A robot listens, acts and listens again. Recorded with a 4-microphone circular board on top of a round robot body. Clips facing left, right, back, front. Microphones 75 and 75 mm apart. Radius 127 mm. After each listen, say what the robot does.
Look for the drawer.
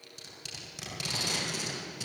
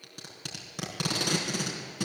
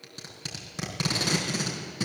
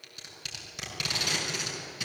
Keep listening.
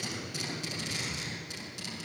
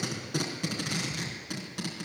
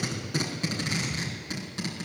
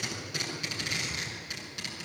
Keep listening.
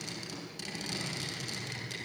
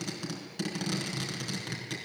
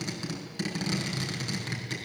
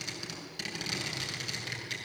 I can't make out a drawer, only tape being pulled.